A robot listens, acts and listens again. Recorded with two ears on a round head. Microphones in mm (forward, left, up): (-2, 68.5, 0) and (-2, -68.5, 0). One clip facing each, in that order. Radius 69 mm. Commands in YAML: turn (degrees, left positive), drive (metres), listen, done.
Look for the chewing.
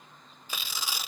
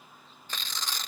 listen: true
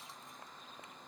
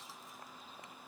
listen: true
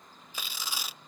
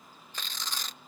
done: "I can't make out chewing, only tearing paper."